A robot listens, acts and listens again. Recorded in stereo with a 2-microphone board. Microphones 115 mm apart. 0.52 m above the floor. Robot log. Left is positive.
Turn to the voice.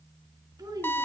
note: The child speaking: about 30° right or 150° right.
cmd yaw -30
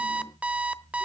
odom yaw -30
cmd idle
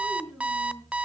end: Found it: a child speaking, straight ahead.